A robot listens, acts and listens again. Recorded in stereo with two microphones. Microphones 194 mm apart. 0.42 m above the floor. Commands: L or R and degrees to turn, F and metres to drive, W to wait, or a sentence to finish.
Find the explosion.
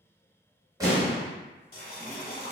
R20
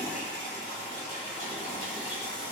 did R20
W
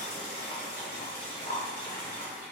I heard an explosion, but can't make it out now. It was about straight ahead or 140° right.